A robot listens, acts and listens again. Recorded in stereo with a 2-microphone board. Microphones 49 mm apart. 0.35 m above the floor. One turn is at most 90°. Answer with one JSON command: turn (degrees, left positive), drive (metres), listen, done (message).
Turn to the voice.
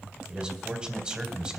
{"turn": -15}
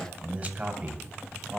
{"turn": -90}
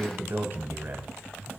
{"turn": -55}
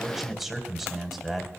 {"done": "Found it: a man speaking, straight ahead."}